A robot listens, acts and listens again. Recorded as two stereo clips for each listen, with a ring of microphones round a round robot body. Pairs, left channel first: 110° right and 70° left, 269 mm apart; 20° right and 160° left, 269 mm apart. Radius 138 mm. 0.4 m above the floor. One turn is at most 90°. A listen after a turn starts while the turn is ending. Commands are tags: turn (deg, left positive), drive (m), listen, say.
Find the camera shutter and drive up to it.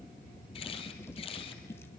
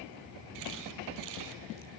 <turn deg="90"/>
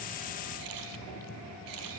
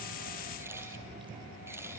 <turn deg="75"/>
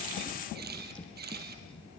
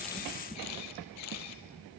<turn deg="10"/>
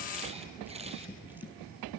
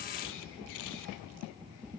<drive m="1.0"/>
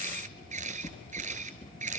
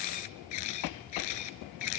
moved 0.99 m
<drive m="1.0"/>
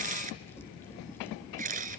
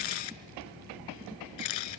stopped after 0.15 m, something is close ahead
<say>I am next to the camera shutter.</say>